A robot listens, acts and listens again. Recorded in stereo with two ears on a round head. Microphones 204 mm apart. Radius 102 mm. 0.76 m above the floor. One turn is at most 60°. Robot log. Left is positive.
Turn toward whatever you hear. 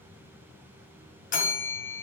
note: The bell: about 35° left or 145° left.
cmd yaw +35
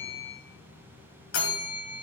note: So it is at 105° left.
cmd yaw +60
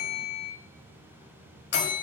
note: The bell is now 55° left.
cmd yaw +55
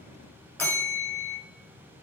note: The bell is now 10° left.
cmd yaw +10
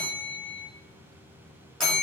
end: Found it: a bell, straight ahead.